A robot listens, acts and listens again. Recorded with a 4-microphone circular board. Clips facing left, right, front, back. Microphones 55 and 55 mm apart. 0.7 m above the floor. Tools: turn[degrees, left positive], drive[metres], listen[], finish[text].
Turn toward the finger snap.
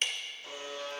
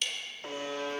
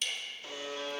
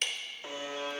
Action: listen[]
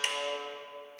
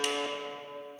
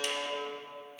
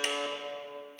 Action: listen[]
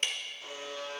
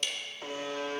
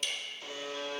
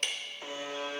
Action: finish[I can't make out a finger snap, only ticking and a buzzer.]